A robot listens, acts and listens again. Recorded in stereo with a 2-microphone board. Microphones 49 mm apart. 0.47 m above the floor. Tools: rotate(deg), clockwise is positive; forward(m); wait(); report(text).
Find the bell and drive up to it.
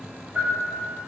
rotate(30)
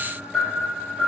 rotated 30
forward(1.0)
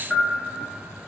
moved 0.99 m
forward(1.0)
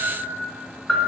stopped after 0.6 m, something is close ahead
rotate(-10)
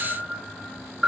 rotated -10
report("Arrived at the bell, straight ahead.")